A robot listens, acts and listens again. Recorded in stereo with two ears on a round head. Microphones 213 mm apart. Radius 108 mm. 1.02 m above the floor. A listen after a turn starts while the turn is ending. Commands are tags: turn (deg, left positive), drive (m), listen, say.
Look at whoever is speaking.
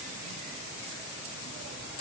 <listen/>
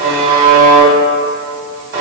<listen/>
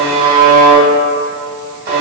<say>I can't make out anyone speaking, only a buzzer.</say>